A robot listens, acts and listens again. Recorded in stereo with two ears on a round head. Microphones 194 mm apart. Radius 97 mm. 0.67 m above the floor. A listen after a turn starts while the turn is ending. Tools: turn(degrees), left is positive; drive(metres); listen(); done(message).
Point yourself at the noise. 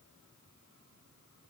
listen()
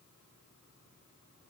listen()
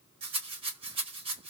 turn(degrees=-25)
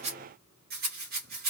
turn(degrees=-125)
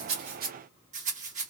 turn(degrees=-40)
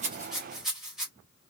done("Found it: a rattle, straight ahead.")